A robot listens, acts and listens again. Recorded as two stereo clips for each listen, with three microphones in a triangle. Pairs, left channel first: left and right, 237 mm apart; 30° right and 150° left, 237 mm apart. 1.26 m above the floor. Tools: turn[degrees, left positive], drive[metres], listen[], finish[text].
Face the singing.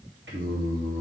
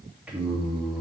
Thought: The singing: 120° right.
Action: turn[-120]
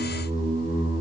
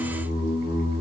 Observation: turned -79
Thought: The singing is now 25° right.
Action: turn[-25]
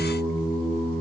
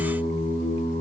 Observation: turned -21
Action: finish[Facing the singing.]